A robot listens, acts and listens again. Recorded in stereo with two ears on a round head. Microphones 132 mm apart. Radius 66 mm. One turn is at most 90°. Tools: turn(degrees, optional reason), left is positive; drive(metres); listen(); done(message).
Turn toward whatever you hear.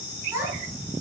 turn(degrees=-15, reason="The child speaking: about 15° right or 165° right.")
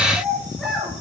turn(degrees=-30)
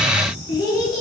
turn(degrees=25, reason="So it is at 25° left.")
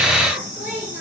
turn(degrees=-10, reason="The child speaking is now 10° right.")
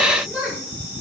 done("Facing the child speaking.")